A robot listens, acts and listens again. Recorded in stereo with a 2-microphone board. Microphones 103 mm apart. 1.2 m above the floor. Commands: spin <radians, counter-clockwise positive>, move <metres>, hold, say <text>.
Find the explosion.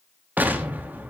spin -0.26
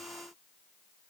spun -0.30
hold
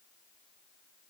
say I heard an explosion, but can't make it out now. It was about straight ahead or 145° right.